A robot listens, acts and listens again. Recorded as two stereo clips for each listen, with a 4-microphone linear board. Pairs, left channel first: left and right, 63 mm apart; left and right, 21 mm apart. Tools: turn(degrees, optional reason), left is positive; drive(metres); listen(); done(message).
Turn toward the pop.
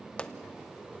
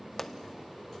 turn(degrees=15, reason="The pop: about 15° left or 165° left.")
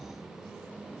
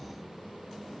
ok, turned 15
listen()
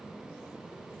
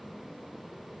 done("I heard a pop, but can't make it out now. It was about straight ahead or 150° left.")